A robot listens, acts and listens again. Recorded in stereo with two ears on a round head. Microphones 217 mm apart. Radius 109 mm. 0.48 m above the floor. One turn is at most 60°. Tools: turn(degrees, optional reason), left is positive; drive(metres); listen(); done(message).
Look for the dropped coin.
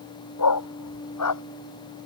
listen()
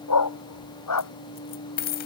turn(degrees=40, reason="The dropped coin: about 40° left or 140° left.")
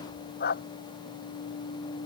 listen()
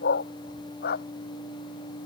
done("I heard a dropped coin, but can't make it out now. It was about straight ahead or 100° left.")